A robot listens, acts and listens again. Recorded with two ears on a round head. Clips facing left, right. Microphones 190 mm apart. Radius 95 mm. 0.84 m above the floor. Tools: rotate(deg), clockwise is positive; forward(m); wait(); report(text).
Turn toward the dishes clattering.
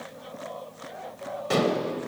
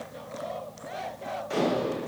rotate(-90)
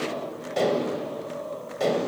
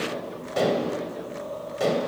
report("Found it: dishes clattering, straight ahead.")